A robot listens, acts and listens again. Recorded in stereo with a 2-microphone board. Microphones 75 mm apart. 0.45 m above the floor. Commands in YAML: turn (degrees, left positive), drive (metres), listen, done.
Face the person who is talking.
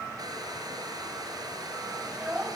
turn: -15
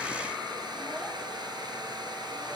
listen: true
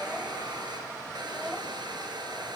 done: "Facing the child speaking, 2 to 4 m away."